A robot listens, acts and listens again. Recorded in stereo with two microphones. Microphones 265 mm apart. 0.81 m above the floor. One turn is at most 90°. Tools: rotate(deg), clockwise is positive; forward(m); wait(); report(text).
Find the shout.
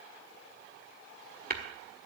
wait()
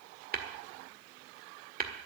wait()
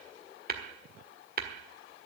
report("I can't make out a shout, only tapping.")